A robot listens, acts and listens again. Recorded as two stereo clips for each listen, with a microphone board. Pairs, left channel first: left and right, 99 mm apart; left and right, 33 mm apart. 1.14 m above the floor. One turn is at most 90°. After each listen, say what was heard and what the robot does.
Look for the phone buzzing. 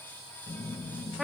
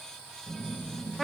The phone buzzing: about 70° left or 110° left. Turn 70° left.
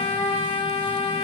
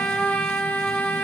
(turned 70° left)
Keep listening.
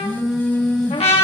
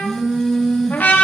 Found it: a phone buzzing, straight ahead.